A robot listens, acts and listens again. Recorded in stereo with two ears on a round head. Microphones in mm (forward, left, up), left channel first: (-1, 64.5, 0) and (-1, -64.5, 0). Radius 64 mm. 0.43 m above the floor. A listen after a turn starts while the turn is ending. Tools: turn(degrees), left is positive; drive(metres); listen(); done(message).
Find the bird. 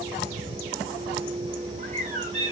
turn(degrees=-50)
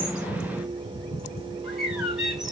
done("Facing the bird.")